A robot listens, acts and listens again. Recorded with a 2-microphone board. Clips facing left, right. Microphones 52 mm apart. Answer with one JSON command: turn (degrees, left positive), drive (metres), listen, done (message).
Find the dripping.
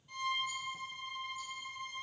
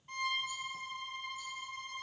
{"listen": true}
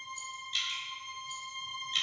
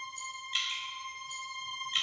{"turn": -30}
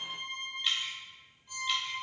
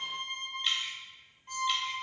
{"done": "Found it: dripping, straight ahead."}